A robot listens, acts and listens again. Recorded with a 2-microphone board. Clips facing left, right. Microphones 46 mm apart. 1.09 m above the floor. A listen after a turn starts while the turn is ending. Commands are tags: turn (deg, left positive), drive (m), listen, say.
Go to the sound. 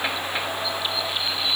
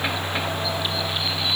<listen/>
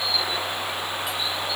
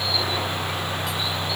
<listen/>
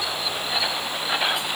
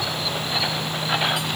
<say>I can't make out anything to turn to.</say>